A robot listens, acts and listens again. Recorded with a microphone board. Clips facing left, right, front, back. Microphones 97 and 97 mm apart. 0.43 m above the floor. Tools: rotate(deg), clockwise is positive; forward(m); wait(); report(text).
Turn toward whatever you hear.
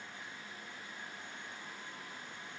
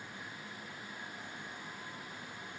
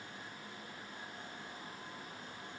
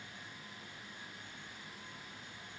wait()
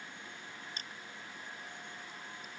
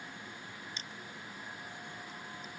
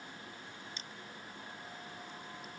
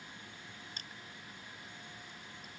rotate(-135)
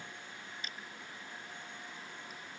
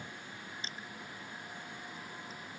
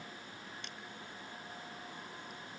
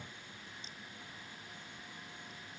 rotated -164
rotate(30)
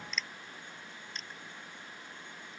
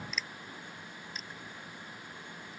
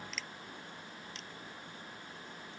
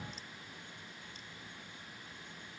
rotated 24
report("Facing the crushing.")